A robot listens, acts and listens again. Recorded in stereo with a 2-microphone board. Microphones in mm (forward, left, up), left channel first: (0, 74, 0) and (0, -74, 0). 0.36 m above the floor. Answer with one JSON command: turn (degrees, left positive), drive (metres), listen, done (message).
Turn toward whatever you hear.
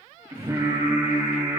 {"turn": -25}
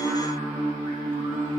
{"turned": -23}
{"turn": -130}
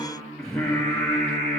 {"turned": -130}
{"done": "Facing the singing, 2 to 4 m away."}